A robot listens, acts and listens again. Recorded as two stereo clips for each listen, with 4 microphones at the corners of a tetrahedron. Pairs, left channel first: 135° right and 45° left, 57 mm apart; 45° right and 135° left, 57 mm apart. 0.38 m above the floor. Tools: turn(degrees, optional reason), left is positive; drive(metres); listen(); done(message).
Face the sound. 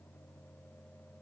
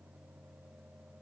listen()
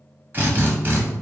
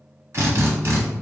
turn(degrees=100, reason="The drill: 100° left.")
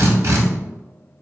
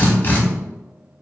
turn(degrees=10, reason="The drill is now 10° left.")
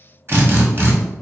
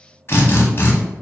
done("Facing the drill.")